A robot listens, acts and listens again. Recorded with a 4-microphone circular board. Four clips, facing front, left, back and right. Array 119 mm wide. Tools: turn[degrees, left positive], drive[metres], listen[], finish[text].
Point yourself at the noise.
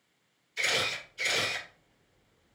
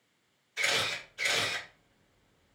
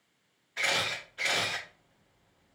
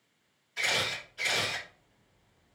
Thought: The camera shutter: 170° right.
Action: turn[-170]
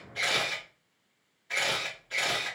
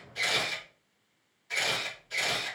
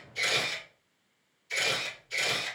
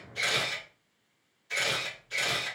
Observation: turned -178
Action: finish[Found it: a camera shutter, straight ahead, 1 to 2 m away.]